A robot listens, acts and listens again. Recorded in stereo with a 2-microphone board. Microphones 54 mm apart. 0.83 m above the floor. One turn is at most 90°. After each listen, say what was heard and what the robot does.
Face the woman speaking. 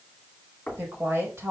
The woman speaking: about 55° right or 125° right. Turn 55° right.
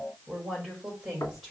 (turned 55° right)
So it is at 10° right. Turn 10° right.
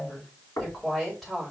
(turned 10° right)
Found it: a woman speaking, straight ahead, over 4 m away.